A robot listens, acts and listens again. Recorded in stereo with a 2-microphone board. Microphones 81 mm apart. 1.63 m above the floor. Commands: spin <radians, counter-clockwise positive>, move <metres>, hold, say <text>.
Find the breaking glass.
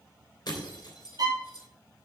spin 1.05
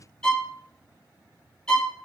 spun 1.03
hold
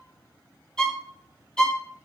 say I heard breaking glass, but can't make it out now. It was about straight ahead or 60° left.